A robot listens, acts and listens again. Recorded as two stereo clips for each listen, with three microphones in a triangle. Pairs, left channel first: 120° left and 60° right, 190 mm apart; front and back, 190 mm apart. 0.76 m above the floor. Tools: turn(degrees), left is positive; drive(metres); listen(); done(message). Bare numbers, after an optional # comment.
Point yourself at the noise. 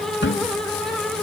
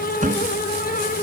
# The cupboard door: 135° left.
turn(135)
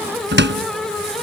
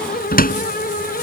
# The cupboard door is now 40° right.
turn(-40)
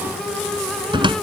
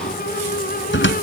done("Facing the cupboard door.")